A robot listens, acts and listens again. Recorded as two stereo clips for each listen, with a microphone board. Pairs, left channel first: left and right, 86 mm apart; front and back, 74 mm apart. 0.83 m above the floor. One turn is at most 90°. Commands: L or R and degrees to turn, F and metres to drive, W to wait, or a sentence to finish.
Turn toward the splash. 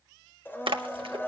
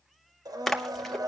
R85
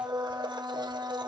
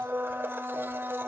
I heard a splash from this way, but can't make it out now.